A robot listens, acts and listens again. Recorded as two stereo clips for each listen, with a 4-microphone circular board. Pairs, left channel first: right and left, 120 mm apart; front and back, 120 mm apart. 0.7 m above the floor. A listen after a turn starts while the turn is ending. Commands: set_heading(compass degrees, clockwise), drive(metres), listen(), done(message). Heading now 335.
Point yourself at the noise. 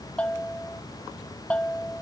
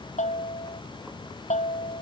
set_heading(345)
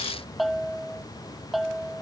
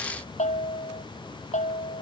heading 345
done("Facing the bell.")